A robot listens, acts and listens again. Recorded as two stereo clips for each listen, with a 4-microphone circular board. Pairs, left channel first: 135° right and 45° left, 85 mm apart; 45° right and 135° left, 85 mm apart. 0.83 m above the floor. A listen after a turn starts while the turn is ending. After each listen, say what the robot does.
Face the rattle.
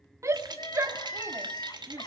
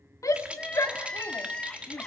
Turn 60° left.
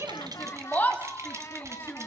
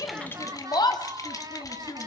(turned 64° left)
Keep listening.
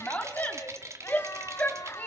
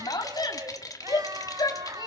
Found it: a rattle, straight ahead.